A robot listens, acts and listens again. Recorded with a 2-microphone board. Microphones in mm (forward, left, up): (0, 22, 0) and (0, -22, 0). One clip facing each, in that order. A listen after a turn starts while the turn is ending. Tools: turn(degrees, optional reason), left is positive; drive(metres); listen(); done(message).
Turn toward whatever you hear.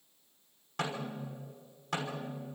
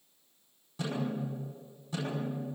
turn(degrees=60, reason="The snare drum: about 60° left or 120° left.")
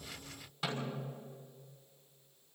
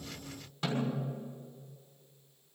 done("Facing the snare drum.")